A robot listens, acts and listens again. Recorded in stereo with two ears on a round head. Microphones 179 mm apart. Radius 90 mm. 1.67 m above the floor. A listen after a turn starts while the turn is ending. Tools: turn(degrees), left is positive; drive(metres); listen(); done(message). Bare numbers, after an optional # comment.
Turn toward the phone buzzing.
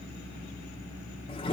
listen()
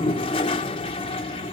listen()
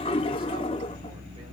done("I can't make out a phone buzzing to turn to.")